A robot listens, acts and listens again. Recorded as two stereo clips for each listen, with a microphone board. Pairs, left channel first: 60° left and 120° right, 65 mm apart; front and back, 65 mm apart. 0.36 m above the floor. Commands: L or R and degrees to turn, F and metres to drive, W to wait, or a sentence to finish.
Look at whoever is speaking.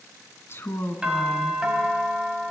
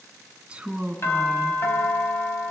L105
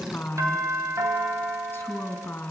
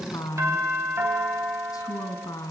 Found it: a woman speaking, straight ahead.